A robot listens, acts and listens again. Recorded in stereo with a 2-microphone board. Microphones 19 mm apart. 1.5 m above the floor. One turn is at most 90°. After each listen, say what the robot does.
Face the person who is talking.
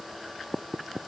Keep listening.
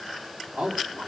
Turn 90° right.
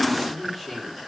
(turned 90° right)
Found it: a man speaking, straight ahead.